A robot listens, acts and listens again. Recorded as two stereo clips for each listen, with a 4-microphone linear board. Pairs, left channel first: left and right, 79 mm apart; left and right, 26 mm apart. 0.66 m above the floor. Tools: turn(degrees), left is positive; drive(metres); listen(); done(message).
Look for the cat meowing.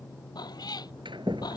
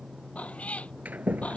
turn(degrees=60)
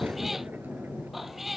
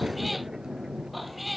done("Found it: a cat meowing, straight ahead.")